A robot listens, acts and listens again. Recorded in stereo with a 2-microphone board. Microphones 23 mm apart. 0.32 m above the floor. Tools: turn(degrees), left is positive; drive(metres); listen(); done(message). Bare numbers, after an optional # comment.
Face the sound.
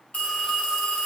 # The phone ringing: about 60° left or 120° left.
turn(60)
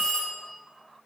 # So it is at 50° left.
turn(50)
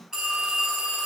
# The phone ringing is now 30° right.
turn(-30)
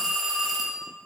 # The phone ringing is now 15° right.
turn(-15)
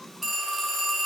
done("Found it: a phone ringing, straight ahead.")